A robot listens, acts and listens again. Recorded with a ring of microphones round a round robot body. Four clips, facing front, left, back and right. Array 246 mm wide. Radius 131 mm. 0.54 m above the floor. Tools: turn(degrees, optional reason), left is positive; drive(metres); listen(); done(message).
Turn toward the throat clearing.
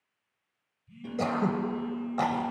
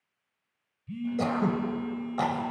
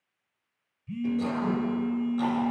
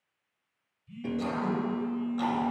turn(degrees=40, reason="The throat clearing: 40° left.")
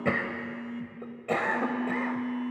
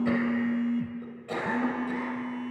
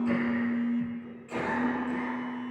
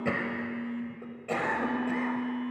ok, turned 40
turn(degrees=-15, reason="The throat clearing is now 15° right.")
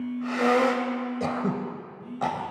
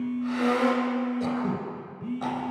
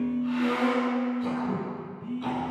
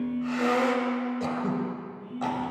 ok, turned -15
done("Found it: throat clearing, straight ahead, 2 to 4 m away.")